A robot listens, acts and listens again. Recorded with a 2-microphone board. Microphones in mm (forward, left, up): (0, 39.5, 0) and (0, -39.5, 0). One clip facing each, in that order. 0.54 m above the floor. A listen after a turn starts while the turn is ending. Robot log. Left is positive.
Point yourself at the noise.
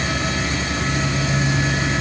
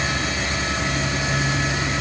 cmd idle
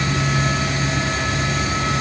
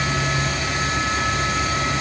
cmd idle
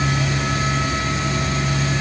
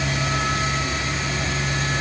end: I can't make out anything.